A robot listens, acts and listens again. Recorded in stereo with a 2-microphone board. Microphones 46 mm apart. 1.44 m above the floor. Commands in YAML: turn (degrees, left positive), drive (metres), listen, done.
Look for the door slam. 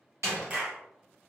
turn: -90
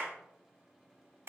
done: "Facing where the door slam came from. I can't hear it now."